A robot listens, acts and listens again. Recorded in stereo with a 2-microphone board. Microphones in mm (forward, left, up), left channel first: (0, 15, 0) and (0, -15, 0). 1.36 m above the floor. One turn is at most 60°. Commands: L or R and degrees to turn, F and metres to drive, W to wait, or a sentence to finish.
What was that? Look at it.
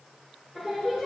R15
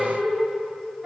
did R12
R45
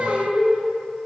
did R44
R60
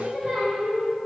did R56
Found it: singing, straight ahead, 2 to 4 m away.